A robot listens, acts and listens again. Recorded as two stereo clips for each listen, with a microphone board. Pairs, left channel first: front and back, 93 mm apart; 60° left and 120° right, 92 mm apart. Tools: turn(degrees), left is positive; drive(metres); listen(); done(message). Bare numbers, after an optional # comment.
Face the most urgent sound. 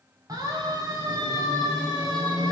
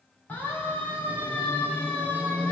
# The siren: 130° left.
turn(130)
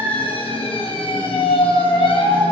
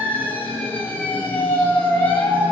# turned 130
# The siren is now 10° right.
turn(-10)
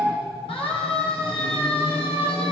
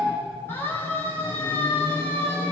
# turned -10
done("Found it: a siren, straight ahead.")